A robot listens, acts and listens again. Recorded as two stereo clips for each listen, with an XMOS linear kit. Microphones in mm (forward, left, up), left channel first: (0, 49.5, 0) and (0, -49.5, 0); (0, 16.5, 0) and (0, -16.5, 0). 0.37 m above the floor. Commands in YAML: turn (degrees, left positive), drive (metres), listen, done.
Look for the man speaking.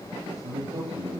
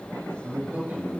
turn: -90
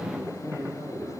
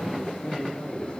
done: "Facing the man speaking, over 4 m away."